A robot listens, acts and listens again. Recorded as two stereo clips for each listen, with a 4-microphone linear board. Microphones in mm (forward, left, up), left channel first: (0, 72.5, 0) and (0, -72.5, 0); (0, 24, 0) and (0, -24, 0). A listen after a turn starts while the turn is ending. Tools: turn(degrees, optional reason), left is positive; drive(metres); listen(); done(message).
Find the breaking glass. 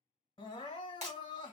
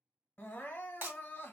turn(degrees=-50, reason="The breaking glass: about 50° right or 130° right.")
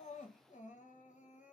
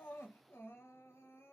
listen()
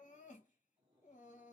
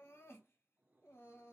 done("I heard breaking glass, but can't make it out now. It was about straight ahead or 80° right.")